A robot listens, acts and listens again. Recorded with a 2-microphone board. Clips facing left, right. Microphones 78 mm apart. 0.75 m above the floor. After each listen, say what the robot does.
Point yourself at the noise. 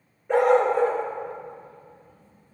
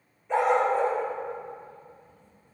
Turn 50° left.
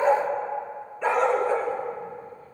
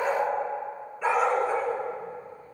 Turn 10° right.
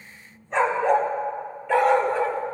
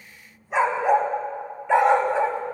Turn 25° right.
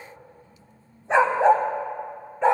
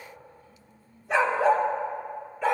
Turn 25° left.
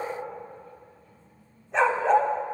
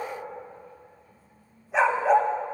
Turn 10° right.
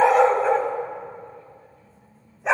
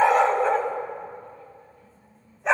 Facing the dog barking, 1 to 2 m away.